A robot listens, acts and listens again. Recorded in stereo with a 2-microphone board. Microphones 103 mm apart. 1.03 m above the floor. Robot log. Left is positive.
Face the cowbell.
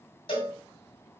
note: The cowbell: about 60° left or 120° left.
cmd yaw +60
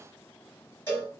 note: So it is at 25° left.
cmd yaw +25
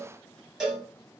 end: Found it: a cowbell, straight ahead.